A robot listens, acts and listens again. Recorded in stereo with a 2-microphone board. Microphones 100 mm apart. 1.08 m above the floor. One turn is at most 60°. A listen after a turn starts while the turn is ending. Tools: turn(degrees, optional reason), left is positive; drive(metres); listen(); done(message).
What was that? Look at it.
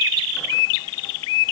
listen()
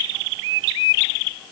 listen()
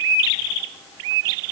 done("I can't make out anything to turn to.")